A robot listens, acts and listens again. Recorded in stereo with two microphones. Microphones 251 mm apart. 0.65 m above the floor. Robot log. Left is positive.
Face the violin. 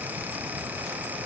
cmd idle
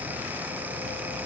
cmd idle
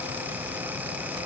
end: I can't make out a violin.